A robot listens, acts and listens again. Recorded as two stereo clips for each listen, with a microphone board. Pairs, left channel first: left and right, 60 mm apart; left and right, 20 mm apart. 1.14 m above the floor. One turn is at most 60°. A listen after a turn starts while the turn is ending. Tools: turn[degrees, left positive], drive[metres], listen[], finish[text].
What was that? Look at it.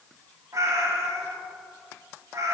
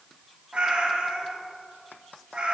Thought: The cat meowing: about 60° right or 120° right.
Action: turn[-60]
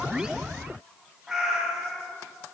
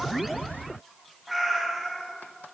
Action: finish[Facing the cat meowing, under 1 m away.]